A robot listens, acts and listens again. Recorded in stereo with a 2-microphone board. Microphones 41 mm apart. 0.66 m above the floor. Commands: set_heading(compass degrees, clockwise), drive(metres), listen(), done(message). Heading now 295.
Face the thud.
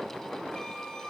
listen()
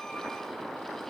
listen()
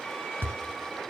set_heading(355)
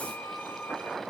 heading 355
listen()
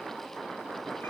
done("I heard a thud, but can't make it out now. It was about straight ahead or 60° right.")